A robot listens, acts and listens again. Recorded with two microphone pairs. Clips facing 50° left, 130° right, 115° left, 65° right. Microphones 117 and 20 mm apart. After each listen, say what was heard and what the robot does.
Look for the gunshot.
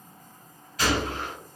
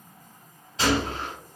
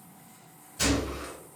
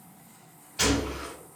The gunshot: 70° right. Turn 70° right.
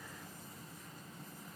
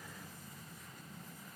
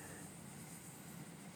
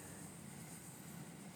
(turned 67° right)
I heard a gunshot from this way, but can't make it out now.